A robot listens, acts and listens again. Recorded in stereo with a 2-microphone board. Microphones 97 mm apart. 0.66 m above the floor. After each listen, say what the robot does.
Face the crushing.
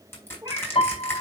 Turn 25° left.
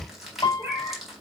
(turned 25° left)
Facing the crushing, over 4 m away.